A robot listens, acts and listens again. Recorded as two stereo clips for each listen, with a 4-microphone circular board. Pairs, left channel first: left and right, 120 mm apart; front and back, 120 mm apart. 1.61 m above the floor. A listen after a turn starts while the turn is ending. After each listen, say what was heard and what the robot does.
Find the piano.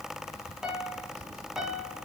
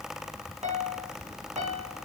The piano: 175° right. Turn 175° right.
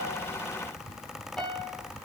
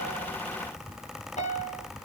Found it: a piano, straight ahead.